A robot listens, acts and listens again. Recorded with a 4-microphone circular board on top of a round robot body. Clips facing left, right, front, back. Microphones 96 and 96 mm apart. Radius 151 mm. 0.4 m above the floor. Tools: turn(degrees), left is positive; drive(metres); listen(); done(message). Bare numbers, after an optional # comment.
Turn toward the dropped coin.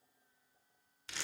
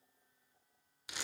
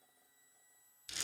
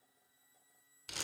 listen()
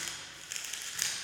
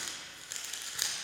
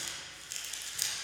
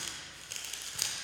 listen()
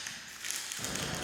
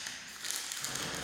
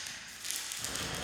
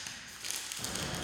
# The dropped coin: 115° left.
turn(115)
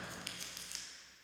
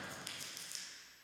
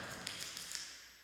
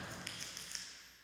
done("Facing where the dropped coin came from. I can't hear it now.")